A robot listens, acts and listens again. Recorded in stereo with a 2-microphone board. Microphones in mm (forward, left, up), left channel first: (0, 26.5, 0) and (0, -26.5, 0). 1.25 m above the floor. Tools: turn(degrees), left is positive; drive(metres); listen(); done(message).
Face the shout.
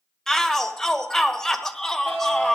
turn(degrees=30)
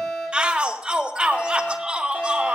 turn(degrees=-20)
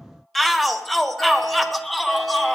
done("Found it: a shout, straight ahead.")